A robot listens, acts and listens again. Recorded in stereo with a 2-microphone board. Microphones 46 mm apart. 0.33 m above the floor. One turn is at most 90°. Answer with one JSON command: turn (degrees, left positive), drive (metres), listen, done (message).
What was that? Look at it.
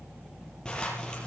{"turn": 15}
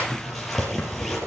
{"done": "Found it: a zipper, straight ahead."}